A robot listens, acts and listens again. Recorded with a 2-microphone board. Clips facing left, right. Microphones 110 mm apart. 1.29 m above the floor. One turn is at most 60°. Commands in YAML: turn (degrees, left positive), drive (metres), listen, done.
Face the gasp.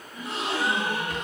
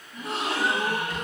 turn: -50
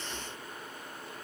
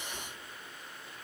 listen: true
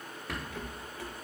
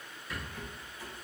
done: "I heard a gasp, but can't make it out now. It was about straight ahead or 80° right."